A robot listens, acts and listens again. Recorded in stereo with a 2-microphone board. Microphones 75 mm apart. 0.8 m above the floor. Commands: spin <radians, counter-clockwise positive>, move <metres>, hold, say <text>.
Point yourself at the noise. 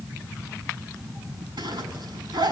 spin -1.57
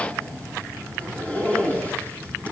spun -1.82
spin 0.35
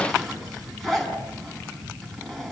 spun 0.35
say Facing the zipper.